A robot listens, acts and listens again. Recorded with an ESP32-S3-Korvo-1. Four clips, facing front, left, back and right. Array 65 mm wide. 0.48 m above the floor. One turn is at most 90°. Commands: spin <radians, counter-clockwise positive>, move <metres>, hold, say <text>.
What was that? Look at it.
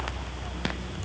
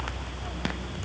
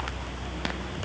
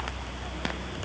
hold
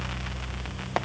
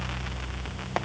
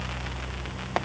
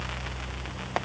hold
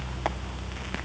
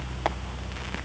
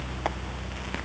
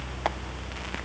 say I can't make out anything.